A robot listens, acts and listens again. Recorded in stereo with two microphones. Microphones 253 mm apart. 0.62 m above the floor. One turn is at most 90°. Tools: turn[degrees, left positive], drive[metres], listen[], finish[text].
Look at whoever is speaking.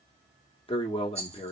Thought: The man speaking: about 20° left or 160° left.
Action: turn[20]
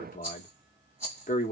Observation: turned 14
Thought: So it is at 150° left.
Action: turn[90]
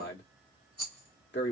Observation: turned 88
Thought: The man speaking is now 55° left.
Action: turn[55]
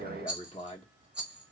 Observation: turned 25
Thought: The man speaking is now 30° left.
Action: turn[30]
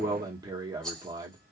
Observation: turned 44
Thought: The man speaking is now 20° right.
Action: turn[-20]
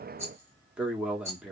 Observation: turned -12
Action: finish[Found it: a man speaking, straight ahead.]